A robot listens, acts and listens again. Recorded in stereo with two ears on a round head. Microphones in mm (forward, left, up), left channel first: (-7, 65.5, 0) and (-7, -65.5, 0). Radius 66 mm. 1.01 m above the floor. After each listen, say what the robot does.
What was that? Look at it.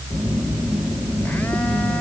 Turn 30° left.
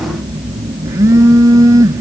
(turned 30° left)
Turn 20° right.
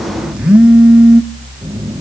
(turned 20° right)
Facing the phone buzzing, under 1 m away.